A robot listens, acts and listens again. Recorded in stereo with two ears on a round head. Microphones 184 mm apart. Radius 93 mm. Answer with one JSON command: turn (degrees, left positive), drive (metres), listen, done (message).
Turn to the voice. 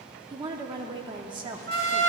{"turn": -20}
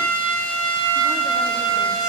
{"listen": true}
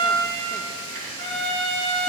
{"listen": true}
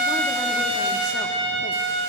{"done": "I heard a woman speaking, but can't make it out now. It was about straight ahead or 140° right."}